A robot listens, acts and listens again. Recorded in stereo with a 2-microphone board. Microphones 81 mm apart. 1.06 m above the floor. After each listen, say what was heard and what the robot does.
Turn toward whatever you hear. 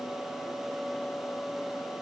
Keep listening.
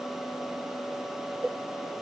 Turn 30° right.
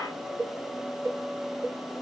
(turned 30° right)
So it is at 145° right. Turn 145° right.
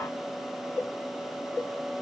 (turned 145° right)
The cowbell is now 15° left. Turn 15° left.
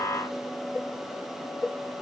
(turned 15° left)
Facing the cowbell.